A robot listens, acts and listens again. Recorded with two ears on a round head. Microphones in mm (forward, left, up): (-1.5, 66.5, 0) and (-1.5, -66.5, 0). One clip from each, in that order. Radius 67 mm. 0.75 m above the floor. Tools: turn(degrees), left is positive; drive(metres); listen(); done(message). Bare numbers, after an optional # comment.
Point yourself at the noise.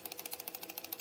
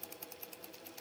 listen()
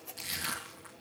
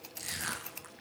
# The crushing: about 55° right or 125° right.
turn(-55)
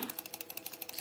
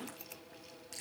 listen()
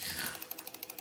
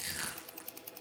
# So it is at 70° right.
turn(-70)
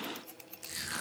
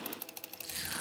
# The crushing is now 10° left.
turn(10)
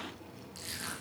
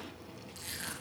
done("Found it: crushing, straight ahead, over 4 m away.")